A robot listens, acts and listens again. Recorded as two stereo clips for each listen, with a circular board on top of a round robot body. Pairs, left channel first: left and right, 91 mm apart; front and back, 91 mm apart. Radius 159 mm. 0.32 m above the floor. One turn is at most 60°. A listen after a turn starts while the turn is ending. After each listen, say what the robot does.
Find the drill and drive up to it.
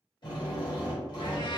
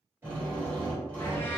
Turn 60° left.
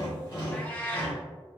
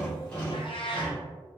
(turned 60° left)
Turn 60° left.
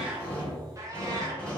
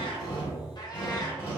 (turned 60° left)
Turn 10° left.
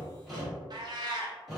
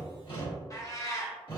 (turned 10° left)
Drive 1.0 m forward.
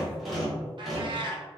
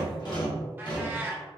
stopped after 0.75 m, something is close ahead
I am next to the drill.